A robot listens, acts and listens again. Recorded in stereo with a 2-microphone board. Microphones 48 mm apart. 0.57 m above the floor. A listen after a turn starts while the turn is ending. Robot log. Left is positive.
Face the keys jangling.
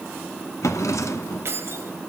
note: The keys jangling: about 60° right or 120° right.
cmd yaw -60
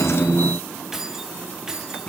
note: So it is at 15° right.
cmd yaw -15
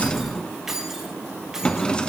note: The keys jangling is now 10° right.
cmd yaw -10
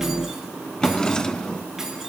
cmd idle
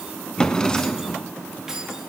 note: The keys jangling is now 10° right.
cmd yaw -10
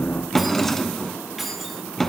end: Facing the keys jangling.